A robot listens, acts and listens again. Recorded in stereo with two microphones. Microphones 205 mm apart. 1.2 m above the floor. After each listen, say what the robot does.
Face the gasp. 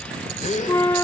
Turn 35° left.
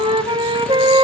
Keep listening.
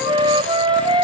I heard a gasp, but can't make it out now. It was about straight ahead or 110° left.